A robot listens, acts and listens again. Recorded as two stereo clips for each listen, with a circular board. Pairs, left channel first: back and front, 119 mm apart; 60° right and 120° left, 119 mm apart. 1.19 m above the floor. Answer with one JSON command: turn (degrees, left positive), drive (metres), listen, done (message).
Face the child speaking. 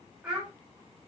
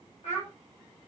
{"turn": -80}
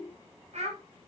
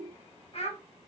{"turn": -30}
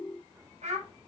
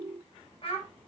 {"turn": -25}
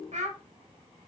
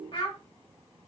{"turn": -20}
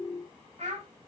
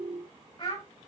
{"turn": -20}
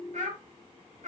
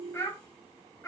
{"done": "Found it: a child speaking, straight ahead, 2 to 4 m away."}